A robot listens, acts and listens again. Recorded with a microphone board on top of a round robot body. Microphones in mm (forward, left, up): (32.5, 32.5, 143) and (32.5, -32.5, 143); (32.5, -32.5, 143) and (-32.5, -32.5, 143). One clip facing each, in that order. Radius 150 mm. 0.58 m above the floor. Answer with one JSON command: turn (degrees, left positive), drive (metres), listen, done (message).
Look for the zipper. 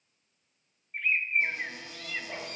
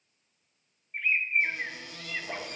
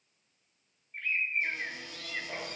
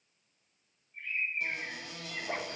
{"turn": -155}
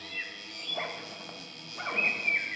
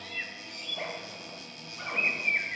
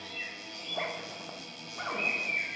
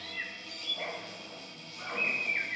{"turn": 40}
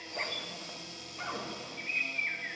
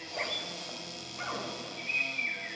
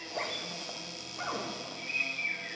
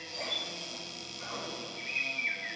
{"done": "Found it: a zipper, straight ahead, 1 to 2 m away."}